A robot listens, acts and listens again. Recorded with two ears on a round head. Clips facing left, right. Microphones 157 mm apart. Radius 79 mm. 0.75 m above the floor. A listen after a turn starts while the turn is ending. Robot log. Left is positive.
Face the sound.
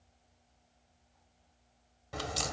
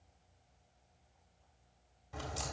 note: The crack: about 70° left or 110° left.
cmd yaw +70
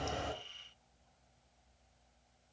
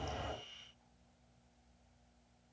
cmd idle
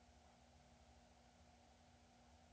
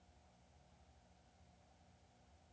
end: I heard a crack, but can't make it out now. It was about straight ahead or 40° left.